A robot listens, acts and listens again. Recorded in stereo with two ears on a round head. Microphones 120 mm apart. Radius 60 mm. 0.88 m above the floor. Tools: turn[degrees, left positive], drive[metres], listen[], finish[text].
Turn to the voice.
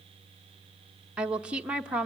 Action: turn[-30]
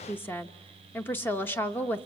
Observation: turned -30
Thought: So it is at 15° left.
Action: turn[15]
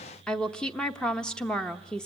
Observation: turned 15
Action: finish[Found it: a woman speaking, straight ahead, under 1 m away.]